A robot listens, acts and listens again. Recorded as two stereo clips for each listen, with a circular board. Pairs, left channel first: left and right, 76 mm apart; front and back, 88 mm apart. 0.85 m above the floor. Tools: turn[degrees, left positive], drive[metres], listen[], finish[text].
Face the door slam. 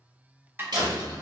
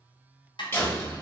Thought: The door slam: 65° right.
Action: turn[-65]
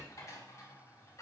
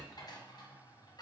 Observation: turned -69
Action: finish[I heard a door slam from this way, but can't make it out now.]